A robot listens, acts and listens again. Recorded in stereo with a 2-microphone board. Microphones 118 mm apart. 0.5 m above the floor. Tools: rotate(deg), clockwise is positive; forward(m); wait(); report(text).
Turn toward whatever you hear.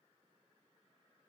wait()
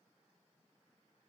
wait()
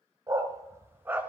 rotate(15)
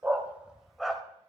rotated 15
rotate(-30)
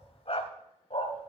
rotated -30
rotate(-120)
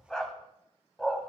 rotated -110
report("Facing the dog barking, 1 to 2 m away.")